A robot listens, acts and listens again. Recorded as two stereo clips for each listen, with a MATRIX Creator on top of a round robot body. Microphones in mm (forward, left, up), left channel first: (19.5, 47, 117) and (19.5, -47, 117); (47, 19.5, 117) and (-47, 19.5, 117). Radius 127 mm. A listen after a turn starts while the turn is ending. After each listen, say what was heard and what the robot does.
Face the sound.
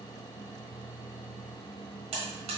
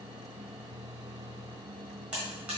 The buzzer: 100° right. Turn 100° right.
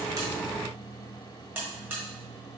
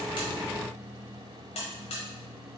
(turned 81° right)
The buzzer is now 20° right. Turn 20° right.
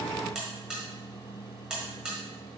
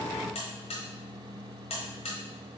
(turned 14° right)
The buzzer is now 10° right. Turn 10° right.
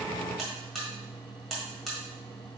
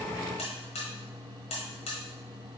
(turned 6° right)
Found it: a buzzer, straight ahead.